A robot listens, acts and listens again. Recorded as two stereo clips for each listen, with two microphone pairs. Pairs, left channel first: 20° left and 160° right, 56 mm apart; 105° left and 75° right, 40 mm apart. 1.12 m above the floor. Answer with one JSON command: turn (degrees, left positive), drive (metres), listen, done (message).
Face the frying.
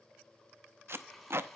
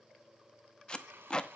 {"turn": -65}
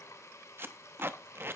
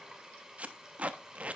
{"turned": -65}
{"done": "Facing the frying."}